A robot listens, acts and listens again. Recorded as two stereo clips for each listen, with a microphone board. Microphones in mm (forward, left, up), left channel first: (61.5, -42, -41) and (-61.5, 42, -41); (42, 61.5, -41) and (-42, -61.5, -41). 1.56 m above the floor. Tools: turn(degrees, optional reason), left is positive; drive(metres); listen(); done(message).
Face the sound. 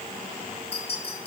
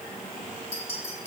turn(degrees=10, reason="The clink: 10° left.")
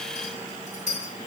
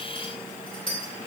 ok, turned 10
done("Found it: a clink, straight ahead, 2 to 4 m away.")